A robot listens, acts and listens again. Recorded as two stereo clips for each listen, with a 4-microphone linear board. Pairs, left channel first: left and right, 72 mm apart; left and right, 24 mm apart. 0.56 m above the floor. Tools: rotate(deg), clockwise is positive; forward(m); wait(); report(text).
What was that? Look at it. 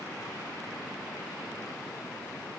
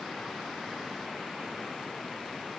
wait()
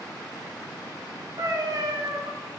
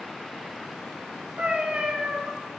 rotate(65)
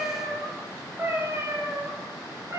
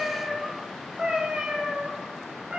rotate(40)
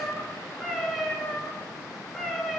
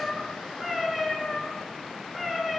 report("Found it: a cat meowing, straight ahead, 1 to 2 m away.")